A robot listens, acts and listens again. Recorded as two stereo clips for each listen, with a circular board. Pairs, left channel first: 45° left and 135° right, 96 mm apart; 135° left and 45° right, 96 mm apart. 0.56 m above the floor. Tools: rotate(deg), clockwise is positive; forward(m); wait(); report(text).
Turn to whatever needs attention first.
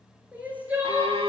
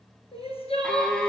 rotate(-150)
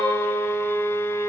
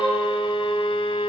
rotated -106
rotate(-45)
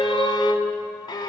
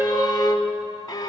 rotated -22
rotate(-25)
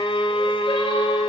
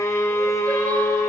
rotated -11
rotate(-10)
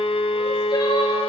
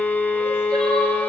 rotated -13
wait()
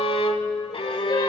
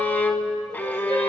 report("I heard crying from this way, but can't make it out now.")